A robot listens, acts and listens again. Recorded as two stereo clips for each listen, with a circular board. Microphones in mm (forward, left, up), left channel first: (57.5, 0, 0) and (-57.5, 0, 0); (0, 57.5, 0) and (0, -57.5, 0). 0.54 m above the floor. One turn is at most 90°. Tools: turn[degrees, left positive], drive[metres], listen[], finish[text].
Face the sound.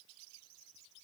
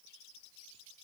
Action: listen[]
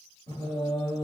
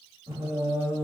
Thought: The singing: 25° right.
Action: turn[-25]
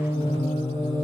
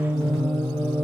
Thought: The singing is now 10° left.
Action: turn[10]
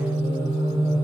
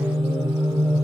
Thought: The singing is now 10° left.
Action: turn[10]
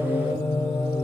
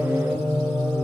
Action: finish[Found it: singing, straight ahead, 2 to 4 m away.]